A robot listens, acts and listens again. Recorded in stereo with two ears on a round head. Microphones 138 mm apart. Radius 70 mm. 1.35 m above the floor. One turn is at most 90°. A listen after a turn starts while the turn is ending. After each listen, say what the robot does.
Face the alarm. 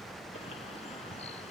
Keep listening.
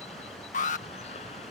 Turn 55° left.
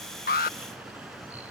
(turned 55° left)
Keep listening.
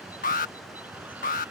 Turn 65° left.
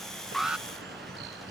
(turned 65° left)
Found it: an alarm, straight ahead.